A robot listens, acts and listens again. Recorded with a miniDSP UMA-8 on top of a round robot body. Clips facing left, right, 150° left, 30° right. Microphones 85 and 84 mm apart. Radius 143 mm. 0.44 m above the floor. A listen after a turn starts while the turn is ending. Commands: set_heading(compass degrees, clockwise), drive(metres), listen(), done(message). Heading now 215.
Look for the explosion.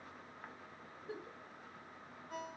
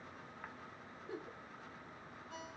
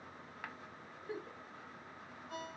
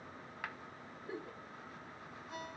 listen()
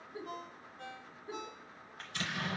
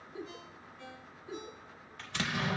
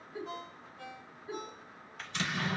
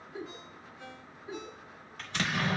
set_heading(280)
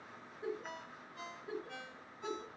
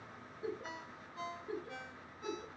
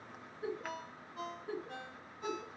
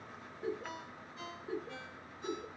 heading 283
done("I heard an explosion from this way, but can't make it out now.")